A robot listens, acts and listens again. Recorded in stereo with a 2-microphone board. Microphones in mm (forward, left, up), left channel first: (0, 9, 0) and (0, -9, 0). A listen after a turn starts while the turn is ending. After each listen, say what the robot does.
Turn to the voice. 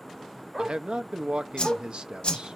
Turn 65° right.
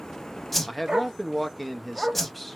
Found it: a man speaking, straight ahead.